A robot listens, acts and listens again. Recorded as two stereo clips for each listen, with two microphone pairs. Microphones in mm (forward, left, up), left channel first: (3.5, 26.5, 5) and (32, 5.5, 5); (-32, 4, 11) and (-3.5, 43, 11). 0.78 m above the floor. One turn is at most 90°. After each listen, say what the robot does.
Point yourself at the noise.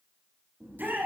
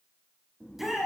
Turn 30° right.
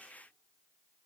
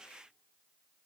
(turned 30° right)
Keep listening.
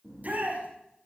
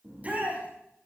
Facing the shout, over 4 m away.